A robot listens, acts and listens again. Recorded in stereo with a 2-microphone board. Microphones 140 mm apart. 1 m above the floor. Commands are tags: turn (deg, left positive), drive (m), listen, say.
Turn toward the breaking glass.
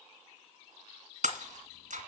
<turn deg="-65"/>
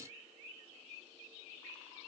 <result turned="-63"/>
<listen/>
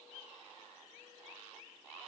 <say>I heard breaking glass, but can't make it out now. It was about 5° right or 50° right.</say>